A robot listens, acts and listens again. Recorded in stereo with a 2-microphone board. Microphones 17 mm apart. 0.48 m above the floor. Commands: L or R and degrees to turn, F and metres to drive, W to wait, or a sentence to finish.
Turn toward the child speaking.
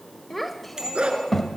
L30
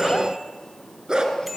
W
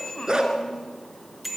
W
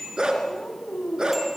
L130
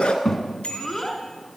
L15
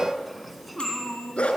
Facing the child speaking.